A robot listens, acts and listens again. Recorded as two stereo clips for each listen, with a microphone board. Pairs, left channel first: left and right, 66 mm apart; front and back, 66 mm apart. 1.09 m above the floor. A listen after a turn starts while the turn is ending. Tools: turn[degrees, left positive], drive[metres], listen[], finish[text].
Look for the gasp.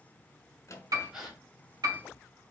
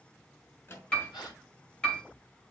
Thought: The gasp: 10° right.
Action: turn[-10]
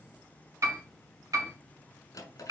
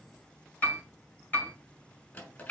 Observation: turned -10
Action: finish[Facing where the gasp came from. I can't hear it now.]